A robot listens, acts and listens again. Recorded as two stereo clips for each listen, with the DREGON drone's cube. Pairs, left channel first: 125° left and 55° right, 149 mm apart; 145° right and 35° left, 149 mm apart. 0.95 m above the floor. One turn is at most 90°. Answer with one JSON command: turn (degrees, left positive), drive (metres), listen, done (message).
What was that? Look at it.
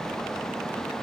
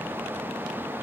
{"listen": true}
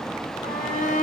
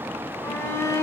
{"turn": 90}
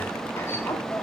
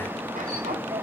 {"turn": 55}
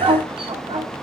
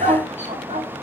{"done": "Facing the shout, 2 to 4 m away."}